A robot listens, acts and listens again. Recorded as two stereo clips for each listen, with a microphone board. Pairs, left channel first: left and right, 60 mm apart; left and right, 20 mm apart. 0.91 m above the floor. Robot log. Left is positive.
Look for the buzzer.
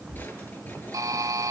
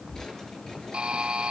cmd yaw -90
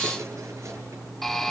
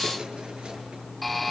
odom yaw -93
end: Found it: a buzzer, straight ahead, 2 to 4 m away.